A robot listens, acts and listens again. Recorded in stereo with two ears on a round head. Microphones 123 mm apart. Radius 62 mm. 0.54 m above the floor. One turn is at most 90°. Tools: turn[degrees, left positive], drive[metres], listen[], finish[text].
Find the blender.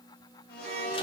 Action: turn[90]
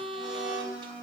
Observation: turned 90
Thought: So it is at 10° right.
Action: turn[-10]
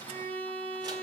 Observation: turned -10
Action: listen[]
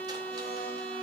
Action: listen[]
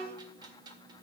Action: finish[I heard a blender from this way, but can't make it out now.]